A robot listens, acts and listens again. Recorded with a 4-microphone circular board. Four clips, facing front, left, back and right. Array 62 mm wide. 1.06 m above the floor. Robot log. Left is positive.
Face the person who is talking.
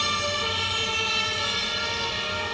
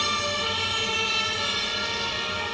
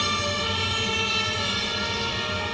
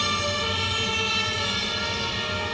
cmd idle
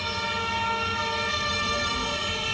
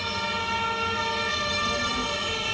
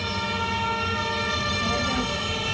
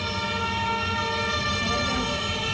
note: The child speaking: 150° right.
cmd yaw -150
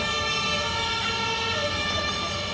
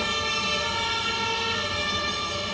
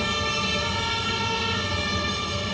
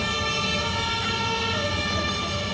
cmd idle
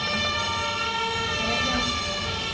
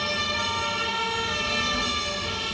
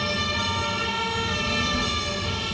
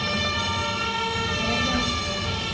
note: The child speaking is now 40° right.
cmd yaw -40
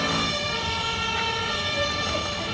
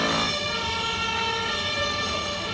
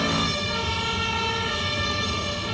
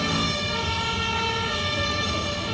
cmd idle
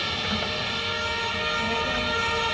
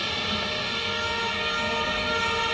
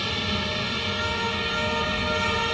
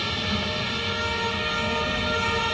note: The child speaking is now 10° left.
cmd yaw +10
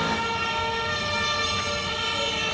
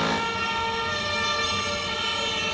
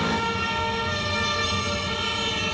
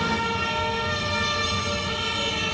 cmd idle
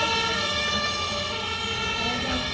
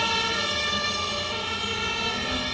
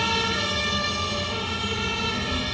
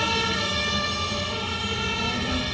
end: Found it: a child speaking, straight ahead.